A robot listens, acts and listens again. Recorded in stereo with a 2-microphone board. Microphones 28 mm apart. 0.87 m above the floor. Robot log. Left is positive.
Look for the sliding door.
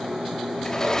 note: The sliding door: about 15° left or 165° left.
cmd yaw +15
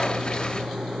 note: So it is at 150° left.
cmd yaw +150
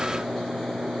cmd idle
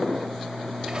cmd idle
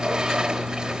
note: The sliding door is now 25° right.
cmd yaw -25
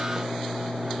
cmd idle
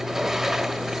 note: The sliding door is now 10° right.
cmd yaw -10
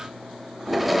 end: Facing the sliding door.